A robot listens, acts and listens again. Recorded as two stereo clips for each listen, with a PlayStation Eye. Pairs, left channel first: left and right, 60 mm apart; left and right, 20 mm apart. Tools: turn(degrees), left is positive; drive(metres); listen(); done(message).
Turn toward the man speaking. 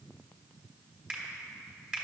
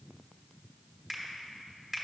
listen()
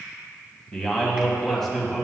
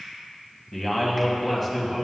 turn(degrees=30)
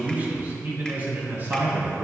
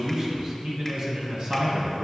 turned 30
turn(degrees=-40)
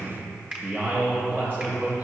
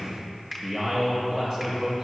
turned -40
turn(degrees=-30)
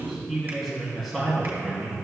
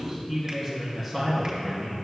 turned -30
done("Facing the man speaking, 2 to 4 m away.")